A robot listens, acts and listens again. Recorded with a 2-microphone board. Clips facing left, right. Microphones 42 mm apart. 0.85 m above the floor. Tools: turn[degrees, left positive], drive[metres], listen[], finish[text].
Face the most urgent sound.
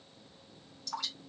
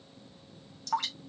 Action: listen[]
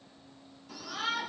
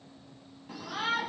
Thought: The shout: about 35° right or 145° right.
Action: turn[-35]
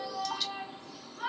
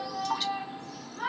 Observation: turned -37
Thought: So it is at 105° right.
Action: turn[-105]
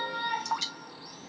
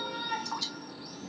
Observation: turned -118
Thought: The shout is now 15° left.
Action: turn[15]
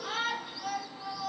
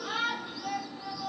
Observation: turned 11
Action: finish[Found it: a shout, straight ahead.]